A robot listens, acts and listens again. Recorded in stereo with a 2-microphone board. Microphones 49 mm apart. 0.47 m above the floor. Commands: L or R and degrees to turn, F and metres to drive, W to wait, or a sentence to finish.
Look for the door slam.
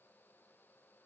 W
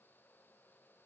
W
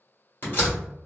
L40
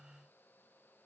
W
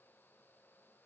I heard a door slam, but can't make it out now. It was about straight ahead or 100° left.